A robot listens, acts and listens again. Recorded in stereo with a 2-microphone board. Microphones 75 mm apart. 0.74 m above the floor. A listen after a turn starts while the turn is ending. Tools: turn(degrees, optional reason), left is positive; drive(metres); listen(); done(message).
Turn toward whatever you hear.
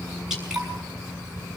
turn(degrees=-30)
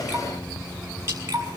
turn(degrees=-145, reason="So it is at 145° right.")
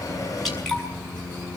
done("Found it: dripping, straight ahead, over 4 m away.")